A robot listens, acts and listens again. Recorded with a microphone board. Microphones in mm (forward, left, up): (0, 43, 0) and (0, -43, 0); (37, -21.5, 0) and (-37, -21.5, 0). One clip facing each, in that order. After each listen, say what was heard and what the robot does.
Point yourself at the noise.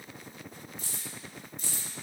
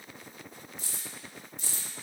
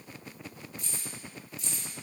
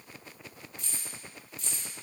The keys jangling: 90° right. Turn 90° right.
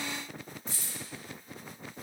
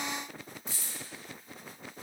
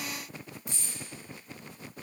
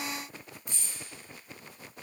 The keys jangling is now 20° right. Turn 20° right.
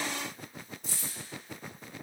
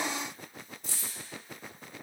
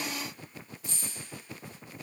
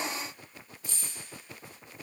Found it: keys jangling, straight ahead, 1 to 2 m away.